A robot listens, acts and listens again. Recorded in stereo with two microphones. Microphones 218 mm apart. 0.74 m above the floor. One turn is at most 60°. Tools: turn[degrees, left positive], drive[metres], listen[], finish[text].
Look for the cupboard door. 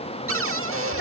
Action: turn[-60]
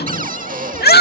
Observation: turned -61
Thought: So it is at 40° right.
Action: turn[-40]
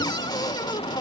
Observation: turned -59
Thought: The cupboard door is now 20° left.
Action: turn[20]
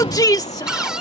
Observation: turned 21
Action: finish[Found it: a cupboard door, straight ahead.]